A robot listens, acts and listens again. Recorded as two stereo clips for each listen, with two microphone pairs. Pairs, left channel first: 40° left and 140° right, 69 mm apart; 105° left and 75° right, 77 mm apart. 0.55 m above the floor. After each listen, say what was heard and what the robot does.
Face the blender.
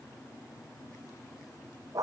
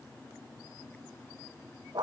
Keep listening.
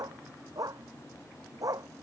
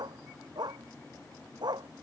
Keep listening.
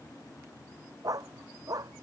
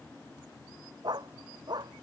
I can't make out a blender to turn to.